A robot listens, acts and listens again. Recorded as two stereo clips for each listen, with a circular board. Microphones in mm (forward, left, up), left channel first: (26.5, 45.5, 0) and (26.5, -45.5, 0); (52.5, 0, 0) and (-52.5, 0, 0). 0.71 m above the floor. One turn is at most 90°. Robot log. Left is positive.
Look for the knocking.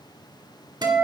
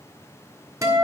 cmd idle
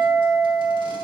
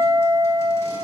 cmd idle
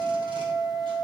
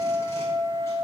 end: I can't make out knocking, only a guitar.